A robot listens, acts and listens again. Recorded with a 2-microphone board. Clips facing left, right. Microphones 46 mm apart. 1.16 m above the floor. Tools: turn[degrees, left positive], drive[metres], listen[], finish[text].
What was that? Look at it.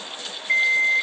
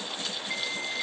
Action: turn[90]
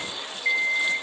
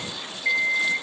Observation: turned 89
Action: finish[Facing the alarm clock, 2 to 4 m away.]